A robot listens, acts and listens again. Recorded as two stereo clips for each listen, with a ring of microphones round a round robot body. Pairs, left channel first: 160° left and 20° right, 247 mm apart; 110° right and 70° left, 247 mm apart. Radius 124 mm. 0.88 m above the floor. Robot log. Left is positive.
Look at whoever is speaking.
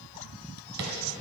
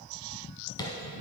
cmd idle
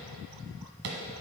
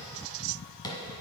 cmd idle
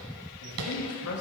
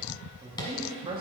note: The man speaking: 135° left.
cmd yaw +135
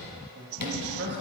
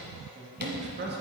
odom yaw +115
note: The man speaking is now 20° left.
cmd yaw +20
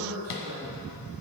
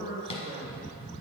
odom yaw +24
end: Facing the man speaking.